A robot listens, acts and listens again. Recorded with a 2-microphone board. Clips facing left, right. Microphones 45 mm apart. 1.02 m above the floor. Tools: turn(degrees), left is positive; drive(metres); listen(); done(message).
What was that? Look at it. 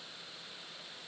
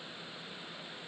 listen()
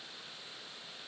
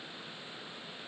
listen()
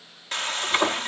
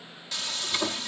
turn(degrees=45)
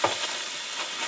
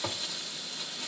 turn(degrees=85)
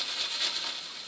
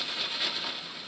done("Facing the frying.")